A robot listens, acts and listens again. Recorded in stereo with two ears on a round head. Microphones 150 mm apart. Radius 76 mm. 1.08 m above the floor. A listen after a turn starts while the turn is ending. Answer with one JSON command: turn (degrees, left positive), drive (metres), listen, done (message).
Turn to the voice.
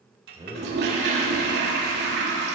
{"turn": -25}
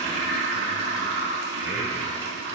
{"listen": true}
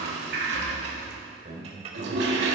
{"turn": -130}
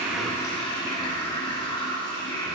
{"listen": true}
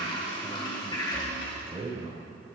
{"turn": -25}
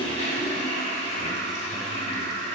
{"listen": true}
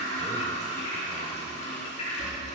{"listen": true}
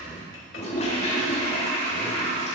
{"done": "I heard a man speaking from this way, but can't make it out now."}